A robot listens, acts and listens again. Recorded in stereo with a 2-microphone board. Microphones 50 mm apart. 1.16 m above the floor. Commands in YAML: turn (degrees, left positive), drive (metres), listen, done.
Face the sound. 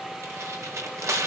turn: -90
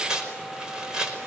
turn: -15
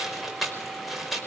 done: "Facing the tearing paper."